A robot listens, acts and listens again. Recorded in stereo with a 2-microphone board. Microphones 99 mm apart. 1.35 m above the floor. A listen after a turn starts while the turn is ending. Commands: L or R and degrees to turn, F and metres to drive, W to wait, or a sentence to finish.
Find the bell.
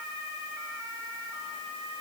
W
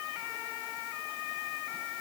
W
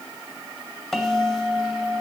L30
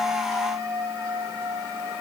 R30
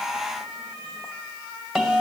Found it: a bell, straight ahead, 2 to 4 m away.